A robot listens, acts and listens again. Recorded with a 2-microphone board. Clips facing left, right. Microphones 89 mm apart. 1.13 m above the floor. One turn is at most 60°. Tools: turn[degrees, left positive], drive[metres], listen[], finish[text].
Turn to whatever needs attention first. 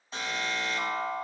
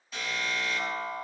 Thought: The alarm: about 35° left or 145° left.
Action: turn[35]
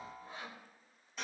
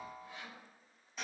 Action: finish[Facing the alarm.]